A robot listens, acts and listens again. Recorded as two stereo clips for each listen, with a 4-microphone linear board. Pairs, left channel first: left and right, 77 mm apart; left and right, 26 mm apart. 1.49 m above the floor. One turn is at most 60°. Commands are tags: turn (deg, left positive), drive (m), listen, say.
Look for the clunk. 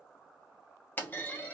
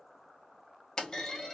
<turn deg="25"/>
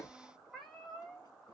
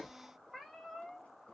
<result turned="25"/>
<turn deg="60"/>
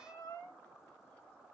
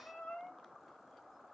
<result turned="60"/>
<turn deg="60"/>
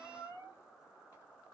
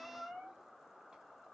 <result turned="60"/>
<turn deg="10"/>
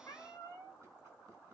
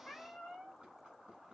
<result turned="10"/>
<say>Facing where the clunk came from. I can't hear it now.</say>